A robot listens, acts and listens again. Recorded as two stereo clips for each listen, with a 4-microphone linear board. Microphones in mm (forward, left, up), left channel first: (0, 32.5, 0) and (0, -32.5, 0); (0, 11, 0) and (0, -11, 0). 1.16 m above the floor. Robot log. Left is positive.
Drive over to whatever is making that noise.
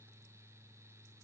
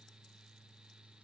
cmd idle
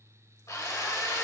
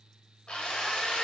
note: The drill: about 60° left or 120° left.
cmd yaw +60
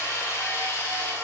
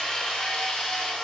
note: So it is at 60° left.
cmd yaw +60
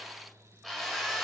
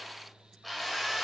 cmd fwd 1.0
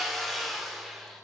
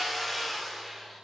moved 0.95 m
cmd fwd 1.0
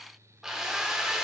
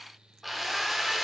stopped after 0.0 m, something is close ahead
end: I am next to the drill.